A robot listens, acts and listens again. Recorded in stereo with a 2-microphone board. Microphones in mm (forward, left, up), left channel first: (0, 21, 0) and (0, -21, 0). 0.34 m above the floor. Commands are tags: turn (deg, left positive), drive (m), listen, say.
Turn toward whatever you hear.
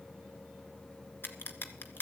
<turn deg="60"/>
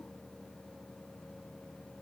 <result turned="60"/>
<listen/>
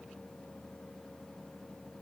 <say>I heard a crack, but can't make it out now. It was about straight ahead or 60° left.</say>